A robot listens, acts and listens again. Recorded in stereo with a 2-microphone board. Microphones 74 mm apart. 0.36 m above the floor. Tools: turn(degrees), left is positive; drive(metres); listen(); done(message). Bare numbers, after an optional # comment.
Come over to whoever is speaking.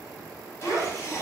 turn(30)
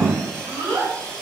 # So it is at 30° right.
turn(-30)
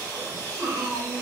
# The child speaking is now 15° right.
turn(-15)
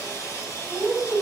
drive(1.0)
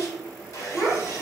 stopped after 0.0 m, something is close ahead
done("Something is in my way. I am facing the child speaking but have not reached it.")